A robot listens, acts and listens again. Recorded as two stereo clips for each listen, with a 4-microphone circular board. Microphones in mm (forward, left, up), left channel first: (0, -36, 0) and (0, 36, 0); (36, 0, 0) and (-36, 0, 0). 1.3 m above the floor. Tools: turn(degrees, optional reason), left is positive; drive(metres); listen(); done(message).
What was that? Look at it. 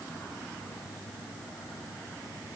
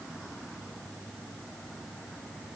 listen()
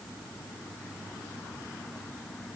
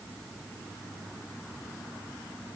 listen()
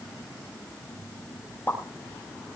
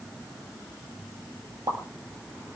turn(degrees=-150, reason="The pop: 150° right.")
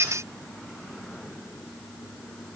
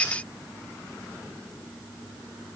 done("I heard a pop from this way, but can't make it out now.")